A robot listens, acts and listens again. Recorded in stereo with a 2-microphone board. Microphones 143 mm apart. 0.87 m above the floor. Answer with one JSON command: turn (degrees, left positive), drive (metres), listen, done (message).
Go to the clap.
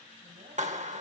{"turn": -60}
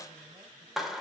{"drive": 1.0}
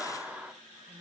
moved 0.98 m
{"turn": -10}
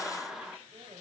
{"drive": 1.0}
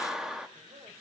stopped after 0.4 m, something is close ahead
{"done": "Arrived at the clap, straight ahead."}